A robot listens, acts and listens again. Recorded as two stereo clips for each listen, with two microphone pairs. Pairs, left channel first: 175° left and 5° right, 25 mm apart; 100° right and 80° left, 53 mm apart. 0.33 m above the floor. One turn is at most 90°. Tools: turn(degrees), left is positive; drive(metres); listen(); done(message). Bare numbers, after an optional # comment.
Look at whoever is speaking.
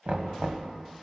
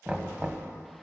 listen()
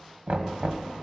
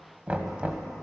listen()
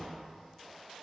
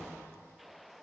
done("I can't make out anyone speaking to turn to.")